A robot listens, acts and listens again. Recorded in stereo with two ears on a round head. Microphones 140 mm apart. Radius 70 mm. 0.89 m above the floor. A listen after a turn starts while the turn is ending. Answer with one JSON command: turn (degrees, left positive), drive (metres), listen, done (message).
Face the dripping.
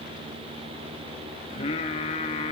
{"listen": true}
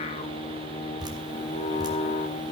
{"turn": -30}
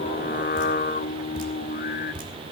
{"turn": -120}
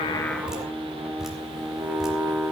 {"done": "Facing the dripping."}